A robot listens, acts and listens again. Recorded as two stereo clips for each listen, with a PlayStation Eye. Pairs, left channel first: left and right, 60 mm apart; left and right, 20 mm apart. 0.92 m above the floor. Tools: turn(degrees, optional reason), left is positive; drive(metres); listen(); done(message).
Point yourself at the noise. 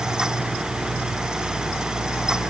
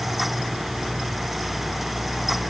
listen()
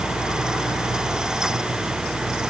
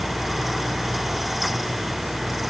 listen()
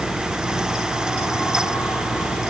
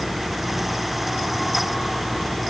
done("I can't make out anything.")